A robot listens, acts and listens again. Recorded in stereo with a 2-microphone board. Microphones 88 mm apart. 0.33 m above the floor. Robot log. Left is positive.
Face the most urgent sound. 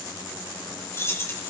cmd idle
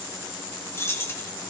cmd idle
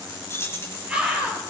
cmd yaw -30
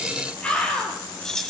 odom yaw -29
note: So it is at 15° left.
cmd yaw +15
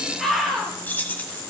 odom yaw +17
end: Found it: a scream, straight ahead, over 4 m away.